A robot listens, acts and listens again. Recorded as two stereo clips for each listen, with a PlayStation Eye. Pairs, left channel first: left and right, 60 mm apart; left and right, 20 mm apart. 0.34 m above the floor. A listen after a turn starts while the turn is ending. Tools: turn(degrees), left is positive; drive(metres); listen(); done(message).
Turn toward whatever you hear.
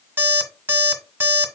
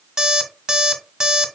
turn(degrees=-35)
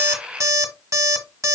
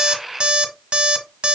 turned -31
turn(degrees=-115)
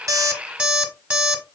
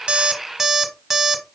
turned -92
turn(degrees=-20)
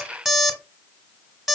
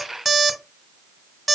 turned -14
done("Facing the alarm clock.")